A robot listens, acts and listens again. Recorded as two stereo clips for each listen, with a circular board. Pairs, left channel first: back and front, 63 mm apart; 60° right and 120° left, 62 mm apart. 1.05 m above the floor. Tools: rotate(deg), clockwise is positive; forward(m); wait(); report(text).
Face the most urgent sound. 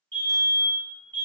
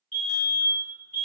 rotate(130)
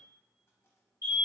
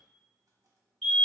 rotate(-25)
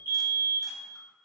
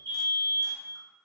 rotate(20)
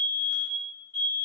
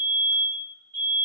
report("Found it: a fire alarm, straight ahead, 1 to 2 m away.")